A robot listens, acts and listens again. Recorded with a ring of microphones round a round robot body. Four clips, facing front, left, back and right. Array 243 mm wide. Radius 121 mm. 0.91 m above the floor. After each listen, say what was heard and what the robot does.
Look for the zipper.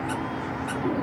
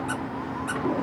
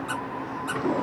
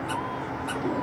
Keep listening.
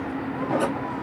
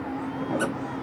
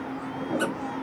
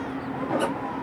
Keep listening.
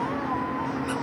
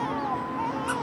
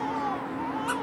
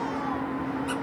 I can't make out a zipper to turn to.